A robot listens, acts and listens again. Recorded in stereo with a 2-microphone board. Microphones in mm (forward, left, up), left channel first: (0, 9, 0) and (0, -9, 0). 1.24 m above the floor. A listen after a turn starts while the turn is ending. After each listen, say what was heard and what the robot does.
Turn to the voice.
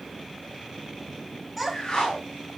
Turn 30° left.
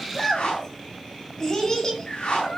So it is at 150° left. Turn 150° left.
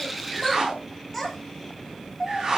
Found it: a child speaking, straight ahead.